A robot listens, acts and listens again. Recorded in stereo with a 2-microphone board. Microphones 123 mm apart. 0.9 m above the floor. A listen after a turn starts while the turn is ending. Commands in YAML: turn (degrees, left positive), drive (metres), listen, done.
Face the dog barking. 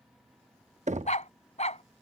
turn: 65
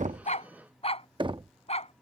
turn: 60
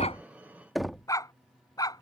turn: 30
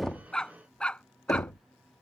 turn: 10
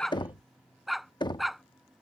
done: "Facing the dog barking."